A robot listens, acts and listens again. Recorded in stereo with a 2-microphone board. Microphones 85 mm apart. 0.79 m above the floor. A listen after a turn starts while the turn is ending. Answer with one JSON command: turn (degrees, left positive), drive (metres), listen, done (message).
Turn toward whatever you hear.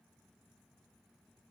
{"listen": true}
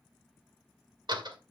{"turn": -65}
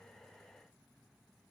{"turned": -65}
{"listen": true}
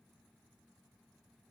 {"done": "I heard a door slam, but can't make it out now. It was about straight ahead or 50° right."}